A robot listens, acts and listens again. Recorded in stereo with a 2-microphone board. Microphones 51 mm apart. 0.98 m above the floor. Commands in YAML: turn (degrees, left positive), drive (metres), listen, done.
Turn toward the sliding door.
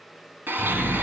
turn: -30
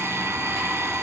listen: true
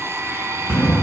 turn: -145
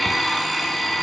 listen: true
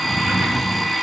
turn: -45
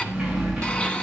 turn: -15
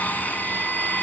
listen: true
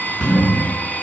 done: "Facing the sliding door, over 4 m away."